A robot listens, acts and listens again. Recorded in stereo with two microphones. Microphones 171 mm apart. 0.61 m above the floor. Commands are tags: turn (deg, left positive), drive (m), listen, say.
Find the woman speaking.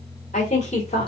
<turn deg="35"/>
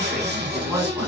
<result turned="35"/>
<turn deg="-20"/>
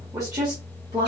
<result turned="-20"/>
<turn deg="-30"/>
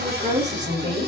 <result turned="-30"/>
<turn deg="-25"/>
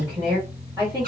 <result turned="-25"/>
<turn deg="-20"/>
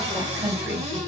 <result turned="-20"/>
<say>Found it: a woman speaking, straight ahead.</say>